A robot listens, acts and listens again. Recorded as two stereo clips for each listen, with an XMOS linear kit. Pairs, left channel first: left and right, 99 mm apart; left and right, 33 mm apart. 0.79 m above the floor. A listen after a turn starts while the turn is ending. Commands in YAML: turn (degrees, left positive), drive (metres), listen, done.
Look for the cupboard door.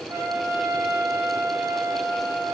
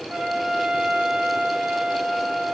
listen: true
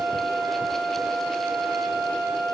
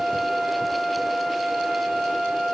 listen: true
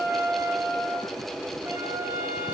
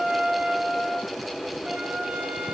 done: "I can't make out a cupboard door to turn to."